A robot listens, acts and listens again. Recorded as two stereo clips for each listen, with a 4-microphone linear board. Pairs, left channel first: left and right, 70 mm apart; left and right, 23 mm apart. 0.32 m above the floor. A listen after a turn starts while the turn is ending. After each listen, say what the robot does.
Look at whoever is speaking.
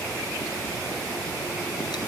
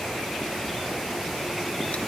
Keep listening.
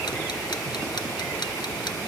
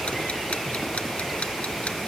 Keep listening.
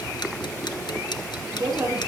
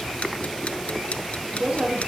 Turn 70° right.
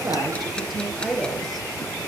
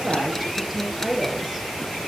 Found it: a woman speaking, straight ahead, over 4 m away.